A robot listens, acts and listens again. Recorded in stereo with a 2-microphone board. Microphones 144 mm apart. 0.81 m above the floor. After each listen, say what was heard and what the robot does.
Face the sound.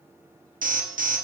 The alarm: about 75° right or 105° right. Turn 75° right.
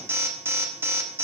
So it is at 15° right. Turn 15° right.
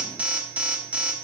The alarm is now 10° right. Turn 10° right.
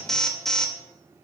Facing the alarm.